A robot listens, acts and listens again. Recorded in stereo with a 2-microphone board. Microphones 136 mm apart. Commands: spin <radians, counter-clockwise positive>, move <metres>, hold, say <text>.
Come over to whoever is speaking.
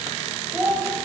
spin -0.35
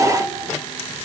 hold
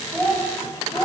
move 1.0
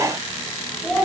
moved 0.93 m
move 1.0
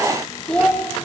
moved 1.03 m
move 1.0
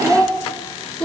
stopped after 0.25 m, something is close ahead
say I am next to the child speaking.